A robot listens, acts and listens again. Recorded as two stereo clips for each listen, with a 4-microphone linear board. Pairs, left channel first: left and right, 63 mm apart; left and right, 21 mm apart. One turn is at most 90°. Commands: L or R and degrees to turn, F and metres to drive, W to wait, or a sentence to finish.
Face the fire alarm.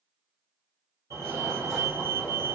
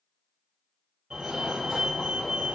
R60
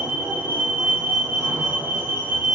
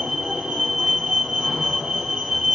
R40
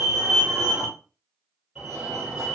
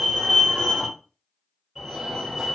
Found it: a fire alarm, straight ahead.